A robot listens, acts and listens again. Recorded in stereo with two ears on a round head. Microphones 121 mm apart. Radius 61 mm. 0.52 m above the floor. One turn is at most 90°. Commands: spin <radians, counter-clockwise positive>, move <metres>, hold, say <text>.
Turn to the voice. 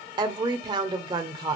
spin -0.61
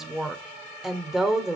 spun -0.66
say Found it: a woman speaking, straight ahead.